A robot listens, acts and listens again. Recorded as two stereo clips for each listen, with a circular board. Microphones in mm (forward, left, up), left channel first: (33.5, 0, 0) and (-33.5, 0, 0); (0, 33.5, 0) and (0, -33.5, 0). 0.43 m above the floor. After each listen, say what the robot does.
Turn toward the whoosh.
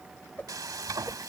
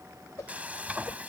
Turn 60° left.
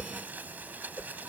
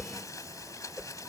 Turn 25° right.
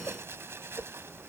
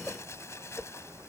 Turn 15° right.
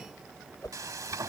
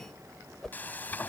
Found it: a whoosh, straight ahead.